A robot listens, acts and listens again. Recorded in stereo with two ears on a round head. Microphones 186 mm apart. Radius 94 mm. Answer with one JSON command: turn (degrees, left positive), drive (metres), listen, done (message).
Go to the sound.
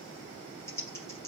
{"turn": 30}
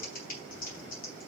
{"turn": 135}
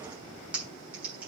{"drive": 1.0}
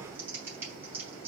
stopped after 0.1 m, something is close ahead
{"turn": -10}
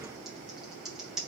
{"done": "Blocked. The typing on a keyboard is further on, straight ahead."}